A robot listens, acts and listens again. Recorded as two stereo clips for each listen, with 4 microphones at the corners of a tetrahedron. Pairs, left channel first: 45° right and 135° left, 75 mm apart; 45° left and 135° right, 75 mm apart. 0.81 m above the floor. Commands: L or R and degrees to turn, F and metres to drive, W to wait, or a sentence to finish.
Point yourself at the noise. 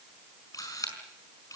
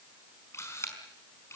Facing the camera shutter.